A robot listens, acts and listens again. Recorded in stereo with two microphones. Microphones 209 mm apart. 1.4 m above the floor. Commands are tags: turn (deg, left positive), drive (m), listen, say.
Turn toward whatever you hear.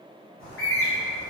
<turn deg="75"/>
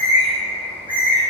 <turn deg="25"/>
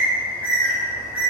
<turn deg="-10"/>
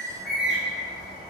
<say>Found it: a bird, straight ahead.</say>